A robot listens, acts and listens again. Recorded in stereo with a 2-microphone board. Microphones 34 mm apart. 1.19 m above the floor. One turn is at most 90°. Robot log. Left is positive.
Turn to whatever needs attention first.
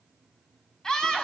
note: The scream: about 20° left or 160° left.
cmd yaw +20
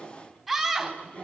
end: Facing the scream.